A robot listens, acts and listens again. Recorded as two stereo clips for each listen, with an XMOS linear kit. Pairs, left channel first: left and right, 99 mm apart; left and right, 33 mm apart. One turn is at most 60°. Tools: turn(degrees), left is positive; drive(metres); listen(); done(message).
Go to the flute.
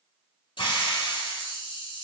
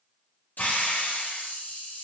listen()
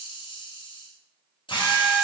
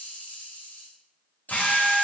turn(degrees=-30)
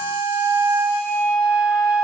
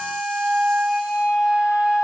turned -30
turn(degrees=-60)
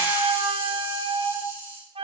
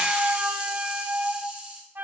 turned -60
turn(degrees=-60)
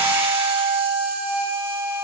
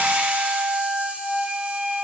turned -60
turn(degrees=-40)
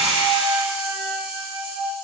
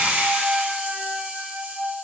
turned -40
turn(degrees=-20)
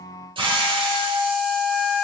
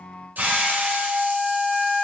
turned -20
drive(metres=1.0)
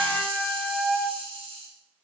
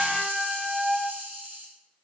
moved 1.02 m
drive(metres=1.0)
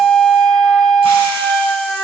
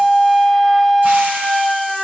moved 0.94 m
drive(metres=1.0)
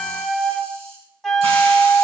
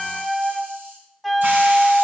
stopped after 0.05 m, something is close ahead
done("I am next to the flute.")